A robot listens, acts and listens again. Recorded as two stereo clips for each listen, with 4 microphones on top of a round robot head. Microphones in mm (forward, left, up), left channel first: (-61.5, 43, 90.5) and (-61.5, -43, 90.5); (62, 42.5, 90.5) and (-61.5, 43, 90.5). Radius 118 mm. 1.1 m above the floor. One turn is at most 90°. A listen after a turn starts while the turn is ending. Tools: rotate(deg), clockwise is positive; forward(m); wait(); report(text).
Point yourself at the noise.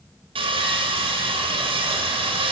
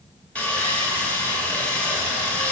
rotate(80)
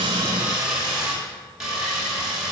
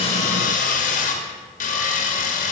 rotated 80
report("Found it: sawing, straight ahead.")